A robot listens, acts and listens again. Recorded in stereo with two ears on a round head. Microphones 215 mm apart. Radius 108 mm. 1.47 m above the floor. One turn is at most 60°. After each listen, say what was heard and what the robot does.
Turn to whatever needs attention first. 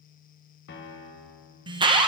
The alarm: about 20° right or 160° right. Turn 20° right.
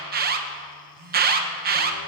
So it is at 140° right. Turn 60° right.
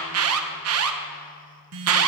The alarm is now 75° right. Turn 60° right.
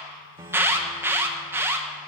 The alarm is now 10° right. Turn 10° right.
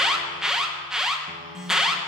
Found it: an alarm, straight ahead, 1 to 2 m away.